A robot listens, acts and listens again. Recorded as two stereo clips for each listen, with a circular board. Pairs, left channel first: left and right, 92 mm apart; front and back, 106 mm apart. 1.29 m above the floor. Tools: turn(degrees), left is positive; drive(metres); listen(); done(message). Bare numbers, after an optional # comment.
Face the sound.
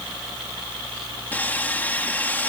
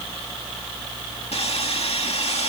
# The sawing: 20° left.
turn(20)
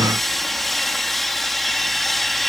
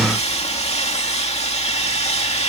done("Found it: sawing, straight ahead.")